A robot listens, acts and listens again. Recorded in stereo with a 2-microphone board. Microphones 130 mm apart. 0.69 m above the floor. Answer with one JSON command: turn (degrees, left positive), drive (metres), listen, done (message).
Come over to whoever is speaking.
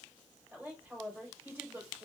{"turn": -30}
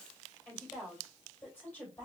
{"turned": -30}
{"turn": 15}
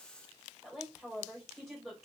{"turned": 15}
{"drive": 1.0}
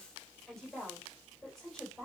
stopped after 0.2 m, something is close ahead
{"done": "Something is in my way. I am facing the woman speaking but have not reached it."}